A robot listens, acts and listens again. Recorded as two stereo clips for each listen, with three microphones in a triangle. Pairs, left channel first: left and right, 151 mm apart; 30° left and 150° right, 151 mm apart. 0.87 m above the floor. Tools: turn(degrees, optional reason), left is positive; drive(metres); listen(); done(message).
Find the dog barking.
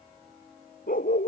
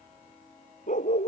turn(degrees=65, reason="The dog barking: 65° left.")
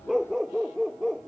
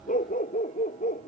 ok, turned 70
done("Facing the dog barking.")